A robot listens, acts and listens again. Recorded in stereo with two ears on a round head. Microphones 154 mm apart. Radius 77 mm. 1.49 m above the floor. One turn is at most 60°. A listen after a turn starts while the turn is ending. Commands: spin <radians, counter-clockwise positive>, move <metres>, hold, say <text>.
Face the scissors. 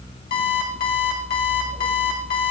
hold
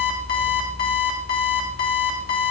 hold
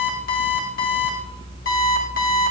say I can't make out scissors to turn to.